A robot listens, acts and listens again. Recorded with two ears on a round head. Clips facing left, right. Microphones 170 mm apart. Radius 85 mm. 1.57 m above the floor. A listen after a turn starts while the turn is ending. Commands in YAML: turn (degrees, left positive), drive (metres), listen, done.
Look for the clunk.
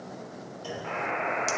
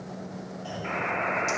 turn: 90
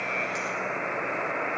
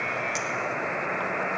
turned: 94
done: "I heard a clunk from this way, but can't make it out now."